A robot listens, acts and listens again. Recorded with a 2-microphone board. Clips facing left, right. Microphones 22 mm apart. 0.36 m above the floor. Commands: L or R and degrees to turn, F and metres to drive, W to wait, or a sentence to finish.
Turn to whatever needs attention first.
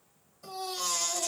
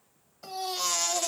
R45
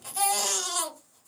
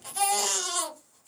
R10
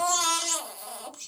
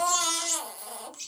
Facing the baby crying.